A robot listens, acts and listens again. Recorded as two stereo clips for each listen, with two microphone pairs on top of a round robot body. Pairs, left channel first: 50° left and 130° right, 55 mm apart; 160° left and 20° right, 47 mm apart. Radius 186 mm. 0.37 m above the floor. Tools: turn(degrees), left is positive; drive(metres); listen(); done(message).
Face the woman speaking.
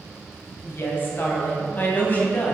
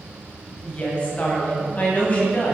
turn(degrees=105)
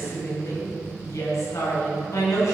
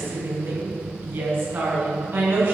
turn(degrees=20)
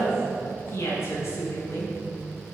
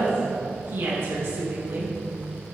done("Facing the woman speaking, over 4 m away.")